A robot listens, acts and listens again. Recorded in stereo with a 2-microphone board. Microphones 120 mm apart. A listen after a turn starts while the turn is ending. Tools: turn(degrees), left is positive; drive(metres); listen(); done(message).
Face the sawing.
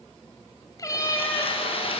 turn(degrees=50)
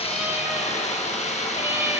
turn(degrees=75)
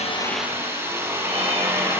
turn(degrees=-20)
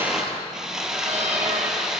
done("Found it: sawing, straight ahead.")